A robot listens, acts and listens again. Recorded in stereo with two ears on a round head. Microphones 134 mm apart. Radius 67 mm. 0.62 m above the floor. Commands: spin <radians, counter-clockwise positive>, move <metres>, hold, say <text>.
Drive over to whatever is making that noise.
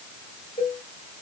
spin 0.96
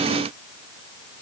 hold
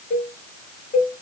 spin 0.96
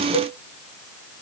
spin -0.17
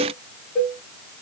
move 1.0
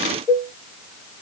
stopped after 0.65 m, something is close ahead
say I am next to the cowbell.